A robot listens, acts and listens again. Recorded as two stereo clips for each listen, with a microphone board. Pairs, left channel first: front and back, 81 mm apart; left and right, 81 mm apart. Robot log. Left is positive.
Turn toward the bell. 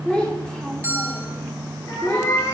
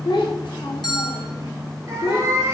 note: The bell: 115° left.
cmd yaw +115
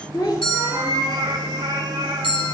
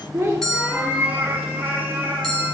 end: Facing the bell, 1 to 2 m away.